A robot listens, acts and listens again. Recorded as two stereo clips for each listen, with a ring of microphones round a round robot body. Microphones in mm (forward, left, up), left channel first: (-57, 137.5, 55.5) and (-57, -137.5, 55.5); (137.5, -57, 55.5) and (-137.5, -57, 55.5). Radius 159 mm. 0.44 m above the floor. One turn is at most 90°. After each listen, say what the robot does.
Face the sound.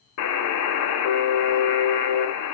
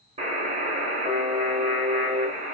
Turn 90° left.
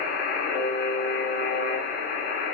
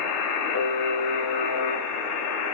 Turn 30° left.
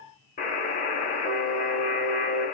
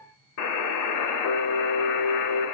Turn 25° left.
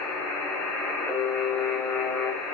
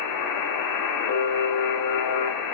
Found it: a buzzer, straight ahead, under 1 m away.